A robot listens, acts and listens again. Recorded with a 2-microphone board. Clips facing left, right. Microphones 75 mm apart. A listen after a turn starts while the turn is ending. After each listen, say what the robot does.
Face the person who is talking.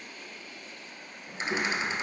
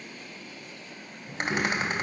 Turn 20° left.
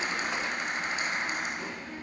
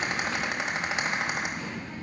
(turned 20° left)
Turn 35° left.
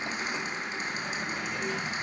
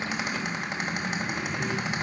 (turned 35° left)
Turn 115° left.
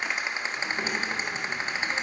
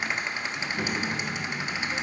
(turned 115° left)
Turn 10° left.
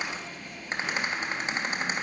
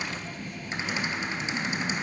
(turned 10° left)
Found it: a child speaking, straight ahead.